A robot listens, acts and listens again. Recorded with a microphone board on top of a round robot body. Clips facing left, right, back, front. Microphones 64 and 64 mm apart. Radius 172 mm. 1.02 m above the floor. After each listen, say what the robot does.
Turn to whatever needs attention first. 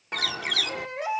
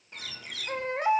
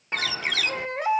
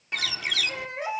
Turn 140° right.
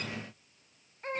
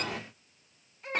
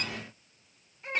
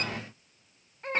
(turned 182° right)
Turn 40° left.
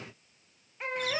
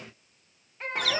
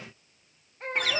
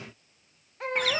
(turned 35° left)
Facing the baby crying.